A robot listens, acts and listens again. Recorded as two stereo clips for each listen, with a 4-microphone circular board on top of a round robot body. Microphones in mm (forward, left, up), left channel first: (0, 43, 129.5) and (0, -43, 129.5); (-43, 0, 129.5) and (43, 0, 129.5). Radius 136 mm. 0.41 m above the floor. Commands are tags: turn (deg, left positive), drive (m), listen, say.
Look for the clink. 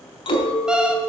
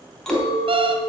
<turn deg="95"/>
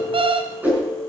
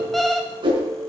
<turn deg="15"/>
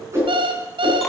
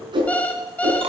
<listen/>
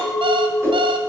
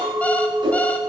<say>Found it: a clink, straight ahead, 2 to 4 m away.</say>